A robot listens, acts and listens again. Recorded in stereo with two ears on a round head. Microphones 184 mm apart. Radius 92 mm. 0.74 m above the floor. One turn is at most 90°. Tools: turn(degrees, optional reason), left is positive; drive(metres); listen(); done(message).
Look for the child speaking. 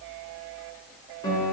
listen()
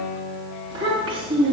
turn(degrees=-25, reason="The child speaking: about 25° right or 155° right.")
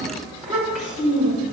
done("Facing the child speaking, over 4 m away.")